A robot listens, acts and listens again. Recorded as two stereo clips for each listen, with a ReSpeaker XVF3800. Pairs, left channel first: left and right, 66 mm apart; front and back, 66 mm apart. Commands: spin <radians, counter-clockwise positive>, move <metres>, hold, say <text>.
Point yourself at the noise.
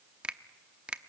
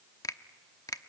spin -0.35
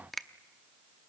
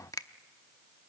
say Facing the finger snap.